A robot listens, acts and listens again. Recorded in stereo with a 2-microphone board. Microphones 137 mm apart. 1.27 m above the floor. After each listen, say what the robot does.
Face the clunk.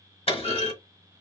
Turn 45° left.
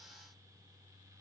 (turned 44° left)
Keep listening.
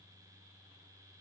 I heard a clunk, but can't make it out now. It was about straight ahead or 90° left.